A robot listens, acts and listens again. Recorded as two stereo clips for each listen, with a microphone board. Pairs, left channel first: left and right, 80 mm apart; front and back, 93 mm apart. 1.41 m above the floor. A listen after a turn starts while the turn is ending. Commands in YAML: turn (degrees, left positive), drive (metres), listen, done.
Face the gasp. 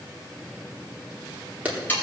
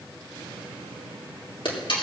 listen: true
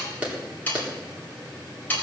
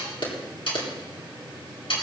listen: true
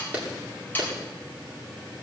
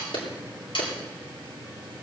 done: "I can't make out a gasp, only sawing and a clap."